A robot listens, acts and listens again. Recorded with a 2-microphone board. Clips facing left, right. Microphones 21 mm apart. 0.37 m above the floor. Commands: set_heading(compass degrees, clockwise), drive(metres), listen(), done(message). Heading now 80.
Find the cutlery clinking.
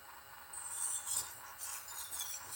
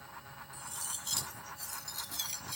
set_heading(155)
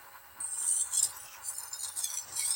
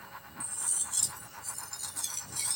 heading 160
done("Facing the cutlery clinking, 1 to 2 m away.")